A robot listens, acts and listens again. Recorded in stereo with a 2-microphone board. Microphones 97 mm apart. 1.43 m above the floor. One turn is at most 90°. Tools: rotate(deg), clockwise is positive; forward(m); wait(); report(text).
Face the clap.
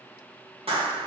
rotate(90)
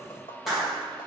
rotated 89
report("Found it: a clap, straight ahead.")